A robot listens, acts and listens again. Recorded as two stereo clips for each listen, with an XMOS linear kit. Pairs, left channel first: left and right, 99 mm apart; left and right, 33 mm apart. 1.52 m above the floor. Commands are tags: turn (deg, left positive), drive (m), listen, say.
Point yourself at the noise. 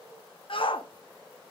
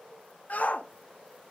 <turn deg="60"/>
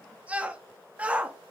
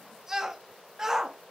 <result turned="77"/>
<turn deg="-15"/>
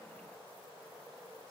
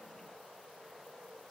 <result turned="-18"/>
<listen/>
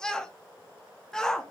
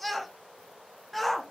<say>Facing the shout.</say>